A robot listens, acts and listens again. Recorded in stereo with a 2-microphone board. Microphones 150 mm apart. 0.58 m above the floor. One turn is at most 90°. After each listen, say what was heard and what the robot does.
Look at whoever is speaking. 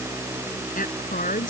The woman speaking: about 65° left or 115° left. Turn 65° left.
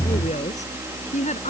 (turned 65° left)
So it is at 50° left. Turn 50° left.
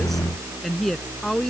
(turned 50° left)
Found it: a woman speaking, straight ahead.